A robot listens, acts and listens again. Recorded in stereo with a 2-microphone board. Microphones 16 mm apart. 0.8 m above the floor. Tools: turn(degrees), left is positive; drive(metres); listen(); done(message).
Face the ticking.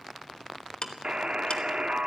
turn(degrees=60)
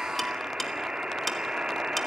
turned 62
turn(degrees=15)
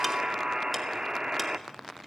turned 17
done("Facing the ticking, 1 to 2 m away.")